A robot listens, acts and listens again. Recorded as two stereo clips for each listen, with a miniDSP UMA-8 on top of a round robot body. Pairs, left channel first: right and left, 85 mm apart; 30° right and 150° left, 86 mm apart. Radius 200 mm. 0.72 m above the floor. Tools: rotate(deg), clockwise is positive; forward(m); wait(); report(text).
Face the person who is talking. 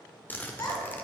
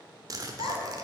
rotate(45)
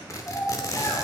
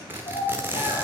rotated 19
rotate(30)
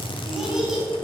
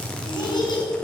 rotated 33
report("Found it: a child speaking, straight ahead, over 4 m away.")